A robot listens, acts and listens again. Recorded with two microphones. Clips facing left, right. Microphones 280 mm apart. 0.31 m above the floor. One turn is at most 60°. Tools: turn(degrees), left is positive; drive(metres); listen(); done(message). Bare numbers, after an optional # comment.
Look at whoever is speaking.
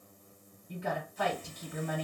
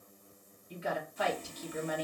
# The woman speaking: about 60° left or 120° left.
turn(60)
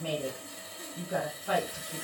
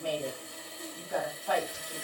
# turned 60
# So it is at 25° left.
turn(25)
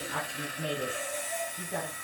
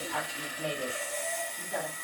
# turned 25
# The woman speaking is now 15° left.
turn(15)
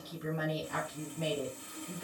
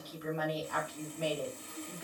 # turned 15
# The woman speaking is now 10° left.
turn(10)
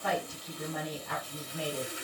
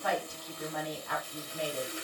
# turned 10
done("Found it: a woman speaking, straight ahead, 1 to 2 m away.")